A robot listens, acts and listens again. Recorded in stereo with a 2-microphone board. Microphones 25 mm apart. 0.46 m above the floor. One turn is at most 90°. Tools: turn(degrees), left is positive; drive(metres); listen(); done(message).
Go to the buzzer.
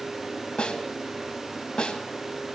listen()
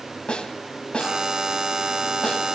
turn(degrees=-20)
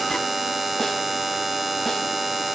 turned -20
drive(metres=1.0)
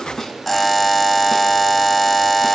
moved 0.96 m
drive(metres=1.0)
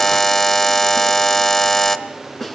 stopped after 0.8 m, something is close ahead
turn(degrees=15)
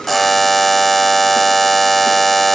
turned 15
turn(degrees=10)
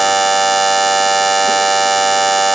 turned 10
done("Arrived at the buzzer, straight ahead.")